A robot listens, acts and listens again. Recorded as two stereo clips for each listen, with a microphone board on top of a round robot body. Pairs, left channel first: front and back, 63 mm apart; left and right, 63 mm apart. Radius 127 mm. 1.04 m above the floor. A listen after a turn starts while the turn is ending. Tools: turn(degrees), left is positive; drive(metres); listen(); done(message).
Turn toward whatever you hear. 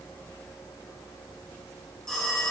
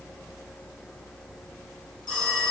turn(degrees=85)
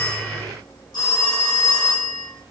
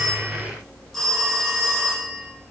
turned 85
done("Facing the phone ringing, 1 to 2 m away.")